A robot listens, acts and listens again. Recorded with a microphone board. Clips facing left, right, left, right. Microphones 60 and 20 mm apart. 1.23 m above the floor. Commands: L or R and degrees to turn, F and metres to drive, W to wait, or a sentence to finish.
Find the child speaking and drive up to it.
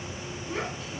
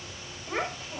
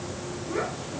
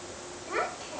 R40
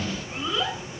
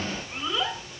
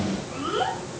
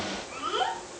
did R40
F1.0
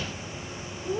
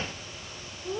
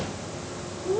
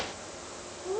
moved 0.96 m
F1.0
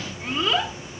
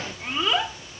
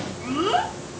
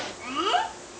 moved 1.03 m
F1.0
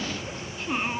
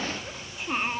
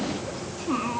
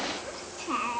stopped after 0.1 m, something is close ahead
I am next to the child speaking.